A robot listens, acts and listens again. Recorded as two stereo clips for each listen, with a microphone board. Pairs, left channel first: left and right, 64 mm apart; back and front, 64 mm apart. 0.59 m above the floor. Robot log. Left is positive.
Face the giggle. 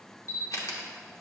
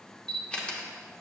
cmd idle
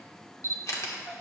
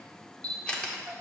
note: The giggle: 45° left.
cmd yaw +45
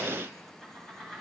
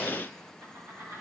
end: Found it: a giggle, straight ahead.